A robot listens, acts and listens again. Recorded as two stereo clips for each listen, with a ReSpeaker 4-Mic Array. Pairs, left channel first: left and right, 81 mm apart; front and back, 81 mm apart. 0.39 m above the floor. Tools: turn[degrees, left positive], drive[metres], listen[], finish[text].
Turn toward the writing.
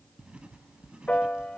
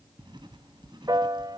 Thought: The writing: 165° right.
Action: turn[-165]
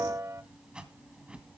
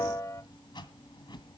Thought: The writing is now 15° right.
Action: turn[-15]
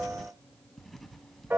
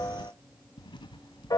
Action: finish[Facing the writing, 1 to 2 m away.]